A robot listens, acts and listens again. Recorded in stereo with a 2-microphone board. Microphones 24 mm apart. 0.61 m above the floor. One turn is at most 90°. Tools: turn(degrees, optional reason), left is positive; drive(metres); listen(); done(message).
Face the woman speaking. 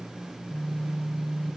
listen()
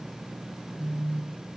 listen()
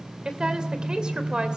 turn(degrees=-40, reason="The woman speaking: about 40° right or 140° right.")
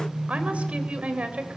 turn(degrees=-90, reason="So it is at 110° right.")
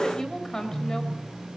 turn(degrees=25, reason="The woman speaking is now 25° left.")
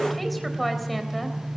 done("Facing the woman speaking, 2 to 4 m away.")